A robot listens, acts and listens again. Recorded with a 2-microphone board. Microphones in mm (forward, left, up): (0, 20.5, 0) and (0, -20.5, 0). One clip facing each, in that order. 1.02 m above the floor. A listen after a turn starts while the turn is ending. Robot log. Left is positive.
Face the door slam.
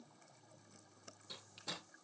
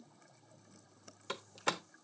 note: The door slam: about 75° right or 105° right.
cmd yaw -75
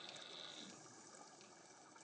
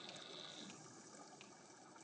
cmd idle
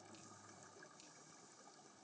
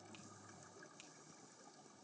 end: I heard a door slam, but can't make it out now. It was about straight ahead or 30° right.